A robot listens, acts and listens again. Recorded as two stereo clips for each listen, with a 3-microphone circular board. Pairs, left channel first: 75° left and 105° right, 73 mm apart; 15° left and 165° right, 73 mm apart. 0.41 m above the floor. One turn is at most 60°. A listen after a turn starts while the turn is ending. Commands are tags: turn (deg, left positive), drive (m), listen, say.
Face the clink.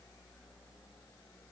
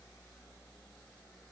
<listen/>
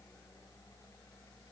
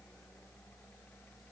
<listen/>
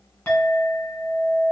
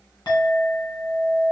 <say>Found it: a clink, straight ahead, 1 to 2 m away.</say>